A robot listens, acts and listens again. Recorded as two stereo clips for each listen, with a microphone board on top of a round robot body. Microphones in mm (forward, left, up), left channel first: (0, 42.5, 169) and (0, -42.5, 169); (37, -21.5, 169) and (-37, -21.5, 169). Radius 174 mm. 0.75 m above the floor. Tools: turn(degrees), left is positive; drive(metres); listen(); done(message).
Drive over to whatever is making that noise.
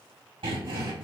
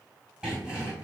turn(degrees=-105)
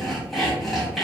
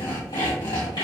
drive(metres=1.0)
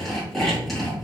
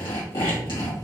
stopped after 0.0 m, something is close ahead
done("Something is in my way. I am facing the sawing but have not reached it.")